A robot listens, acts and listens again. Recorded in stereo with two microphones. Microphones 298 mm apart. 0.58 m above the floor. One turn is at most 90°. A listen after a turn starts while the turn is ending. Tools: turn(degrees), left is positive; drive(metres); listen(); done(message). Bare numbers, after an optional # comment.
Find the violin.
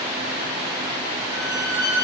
# The violin: about 75° right or 105° right.
turn(-75)
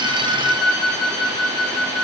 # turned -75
done("Facing the violin, over 4 m away.")